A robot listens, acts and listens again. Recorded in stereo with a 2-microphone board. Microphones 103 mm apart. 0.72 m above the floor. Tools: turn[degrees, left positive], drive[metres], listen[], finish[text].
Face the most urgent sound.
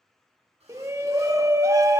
Thought: The shout: about 30° right or 150° right.
Action: turn[-30]
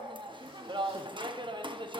Thought: So it is at 115° right.
Action: turn[-115]
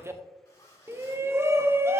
Thought: The shout is now 30° right.
Action: turn[-30]
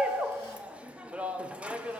Thought: The shout is now 15° right.
Action: turn[-15]
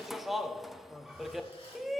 Action: finish[Facing the shout, under 1 m away.]